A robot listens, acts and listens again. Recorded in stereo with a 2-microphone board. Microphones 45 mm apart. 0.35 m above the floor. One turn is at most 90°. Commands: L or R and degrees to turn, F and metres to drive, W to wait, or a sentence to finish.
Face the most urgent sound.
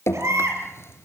R90
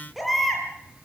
Found it: a baby crying, straight ahead.